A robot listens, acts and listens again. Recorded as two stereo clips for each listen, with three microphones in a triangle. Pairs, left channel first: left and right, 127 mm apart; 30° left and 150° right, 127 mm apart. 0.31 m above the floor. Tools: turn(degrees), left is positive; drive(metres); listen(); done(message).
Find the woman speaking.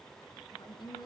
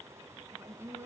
turn(degrees=145)
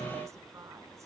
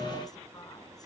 listen()
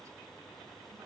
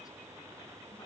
listen()
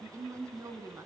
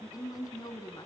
turn(degrees=-25)
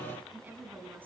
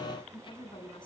turn(degrees=-15)
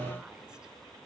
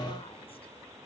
listen()
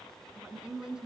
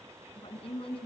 done("Found it: a woman speaking, straight ahead.")